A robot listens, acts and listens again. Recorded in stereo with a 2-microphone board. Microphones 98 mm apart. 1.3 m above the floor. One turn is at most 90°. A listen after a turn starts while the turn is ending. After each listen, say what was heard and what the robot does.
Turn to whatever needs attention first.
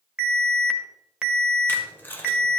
Turn 30° right.
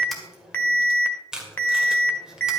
So it is at 20° left. Turn 20° left.
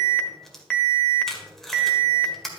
Facing the alarm.